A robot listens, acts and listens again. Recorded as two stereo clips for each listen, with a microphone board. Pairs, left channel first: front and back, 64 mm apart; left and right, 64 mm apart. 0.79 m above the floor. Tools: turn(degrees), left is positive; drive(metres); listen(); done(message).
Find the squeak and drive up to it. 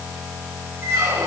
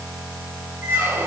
turn(degrees=-135)
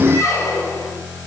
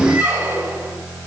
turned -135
turn(degrees=-35)
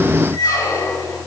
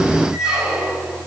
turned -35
turn(degrees=-10)
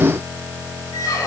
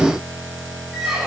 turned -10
drive(metres=1.0)
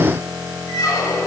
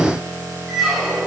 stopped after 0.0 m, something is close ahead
done("Something is in my way. I am facing the squeak but have not reached it.")